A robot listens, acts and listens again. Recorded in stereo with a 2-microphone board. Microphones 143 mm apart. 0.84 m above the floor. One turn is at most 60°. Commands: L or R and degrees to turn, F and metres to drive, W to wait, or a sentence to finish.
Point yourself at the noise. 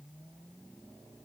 W
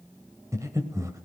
R20
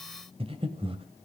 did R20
R60
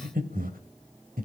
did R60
R60
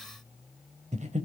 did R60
R55
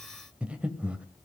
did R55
R10
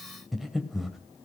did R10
Facing the breathing, 1 to 2 m away.